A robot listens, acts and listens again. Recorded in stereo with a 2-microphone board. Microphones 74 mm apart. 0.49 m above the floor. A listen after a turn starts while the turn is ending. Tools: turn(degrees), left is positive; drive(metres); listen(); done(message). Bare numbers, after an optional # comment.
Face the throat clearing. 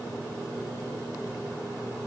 listen()
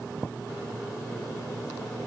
listen()
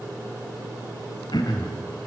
# The throat clearing: about 70° left or 110° left.
turn(70)
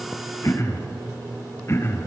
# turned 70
# So it is at 40° left.
turn(40)
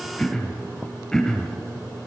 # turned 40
# The throat clearing is now 10° left.
turn(10)
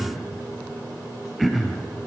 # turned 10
done("Found it: throat clearing, straight ahead, 2 to 4 m away.")